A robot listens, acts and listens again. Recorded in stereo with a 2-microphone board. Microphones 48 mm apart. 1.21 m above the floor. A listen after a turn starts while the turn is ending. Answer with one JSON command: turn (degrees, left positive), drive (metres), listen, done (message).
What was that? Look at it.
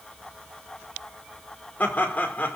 {"turn": 40}
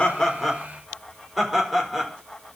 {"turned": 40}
{"done": "Found it: laughter, straight ahead, over 4 m away."}